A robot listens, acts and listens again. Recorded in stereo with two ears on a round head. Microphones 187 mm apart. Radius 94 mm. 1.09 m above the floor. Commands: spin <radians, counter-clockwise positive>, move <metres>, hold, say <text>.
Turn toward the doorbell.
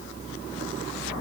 hold
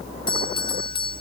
spin 0.44
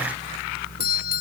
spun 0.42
spin 2.18
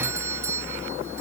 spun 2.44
spin -0.26
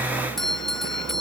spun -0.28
say Found it: a doorbell, straight ahead.